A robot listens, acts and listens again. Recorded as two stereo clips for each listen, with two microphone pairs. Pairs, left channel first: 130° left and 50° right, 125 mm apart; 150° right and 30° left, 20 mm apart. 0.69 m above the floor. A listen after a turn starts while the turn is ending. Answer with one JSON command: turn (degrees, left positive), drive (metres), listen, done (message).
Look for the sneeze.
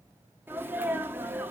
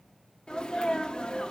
{"turn": -120}
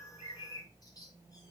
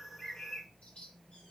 {"done": "Facing where the sneeze came from. I can't hear it now."}